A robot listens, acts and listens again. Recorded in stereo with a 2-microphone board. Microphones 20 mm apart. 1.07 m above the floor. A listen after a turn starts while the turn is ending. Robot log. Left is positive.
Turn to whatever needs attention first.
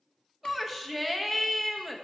cmd yaw -30
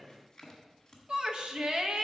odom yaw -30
note: So it is at 140° right.
cmd yaw -140
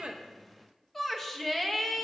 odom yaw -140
note: The shout is now 10° left.
cmd yaw +10
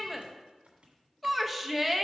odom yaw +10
end: Facing the shout.